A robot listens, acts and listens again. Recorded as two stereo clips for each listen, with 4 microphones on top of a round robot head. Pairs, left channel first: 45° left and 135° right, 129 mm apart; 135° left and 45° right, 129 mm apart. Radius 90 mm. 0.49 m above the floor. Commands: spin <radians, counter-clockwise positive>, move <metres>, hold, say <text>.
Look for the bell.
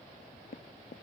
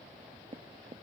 hold
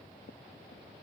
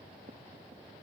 hold
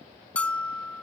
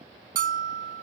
spin -0.61
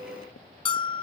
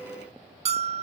say Found it: a bell, straight ahead.